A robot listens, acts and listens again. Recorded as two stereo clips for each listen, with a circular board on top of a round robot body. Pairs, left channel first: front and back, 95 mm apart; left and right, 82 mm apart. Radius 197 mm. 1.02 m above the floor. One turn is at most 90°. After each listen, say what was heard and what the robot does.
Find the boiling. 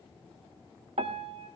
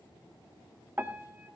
Keep listening.
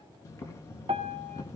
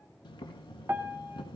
The boiling: 60° left. Turn 60° left.
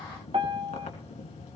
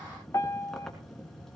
Facing the boiling.